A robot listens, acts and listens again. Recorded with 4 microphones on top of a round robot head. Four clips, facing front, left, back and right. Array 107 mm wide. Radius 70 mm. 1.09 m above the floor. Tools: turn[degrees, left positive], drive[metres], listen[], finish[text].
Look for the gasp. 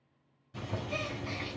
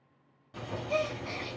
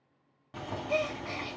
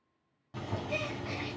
Thought: The gasp: 160° left.
Action: turn[160]
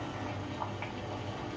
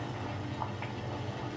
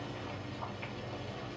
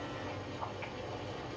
Action: finish[I heard a gasp from this way, but can't make it out now.]